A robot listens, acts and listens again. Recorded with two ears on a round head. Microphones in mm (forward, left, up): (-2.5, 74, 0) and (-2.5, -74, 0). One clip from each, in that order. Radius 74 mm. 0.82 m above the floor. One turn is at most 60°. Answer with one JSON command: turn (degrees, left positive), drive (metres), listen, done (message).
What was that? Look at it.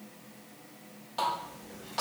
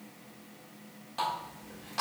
{"turn": -30}
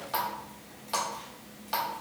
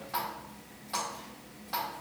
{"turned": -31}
{"turn": 25}
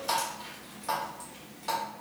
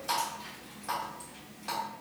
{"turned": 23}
{"done": "Found it: a running tap, straight ahead."}